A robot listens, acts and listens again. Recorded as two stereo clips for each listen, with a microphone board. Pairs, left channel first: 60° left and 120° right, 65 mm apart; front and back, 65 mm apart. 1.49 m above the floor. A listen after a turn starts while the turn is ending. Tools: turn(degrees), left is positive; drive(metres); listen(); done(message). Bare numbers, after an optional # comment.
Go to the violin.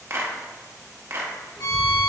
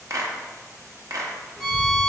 # The violin: 80° left.
turn(80)
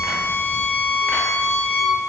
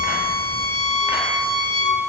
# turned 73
# The violin is now 10° left.
turn(10)
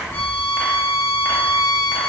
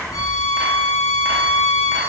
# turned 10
drive(1.0)
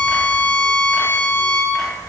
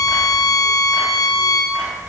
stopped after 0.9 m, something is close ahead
done("Arrived at the violin, straight ahead.")